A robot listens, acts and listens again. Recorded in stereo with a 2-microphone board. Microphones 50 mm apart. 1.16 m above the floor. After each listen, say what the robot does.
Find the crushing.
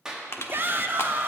Turn 60° left.
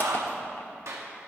Keep listening.
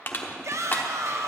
Turn 45° left.
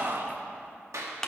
Turn 10° left.
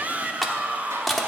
Facing the crushing, 1 to 2 m away.